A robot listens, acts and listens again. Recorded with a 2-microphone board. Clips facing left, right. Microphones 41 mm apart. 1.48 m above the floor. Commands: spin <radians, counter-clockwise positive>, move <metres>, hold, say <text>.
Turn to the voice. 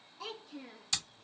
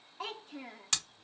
spin -0.79
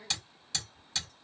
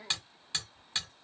spin -1.31
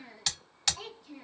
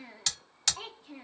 spin -0.61
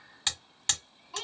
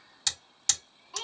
say Found it: a child speaking, straight ahead.